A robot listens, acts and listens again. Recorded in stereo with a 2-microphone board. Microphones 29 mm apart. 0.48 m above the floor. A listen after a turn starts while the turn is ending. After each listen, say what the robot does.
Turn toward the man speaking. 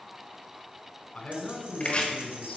Turn 45° left.
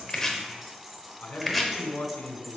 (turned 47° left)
Turn 80° left.
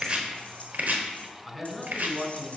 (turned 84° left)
Found it: a man speaking, straight ahead.